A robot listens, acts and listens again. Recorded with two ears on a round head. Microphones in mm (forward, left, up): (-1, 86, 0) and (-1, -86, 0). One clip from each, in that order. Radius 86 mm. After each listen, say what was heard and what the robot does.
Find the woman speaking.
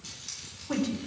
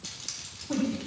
The woman speaking: about 55° left or 125° left. Turn 55° left.
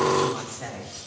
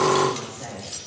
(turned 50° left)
So it is at 65° left. Turn 65° left.
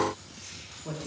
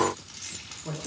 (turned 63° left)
Found it: a woman speaking, straight ahead, 2 to 4 m away.